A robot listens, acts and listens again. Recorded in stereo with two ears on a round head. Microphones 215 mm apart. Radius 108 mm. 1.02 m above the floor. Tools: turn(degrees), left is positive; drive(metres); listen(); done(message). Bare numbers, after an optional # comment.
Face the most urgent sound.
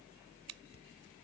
listen()
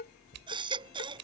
# The baby crying: about 20° right or 160° right.
turn(-20)
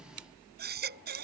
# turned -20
# So it is at 135° right.
turn(-135)
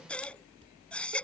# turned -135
done("Found it: a baby crying, straight ahead.")